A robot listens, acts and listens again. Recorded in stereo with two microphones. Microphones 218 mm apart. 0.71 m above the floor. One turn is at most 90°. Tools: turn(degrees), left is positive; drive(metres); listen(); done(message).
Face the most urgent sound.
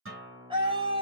turn(degrees=-25)
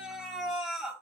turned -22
done("Found it: a scream, straight ahead.")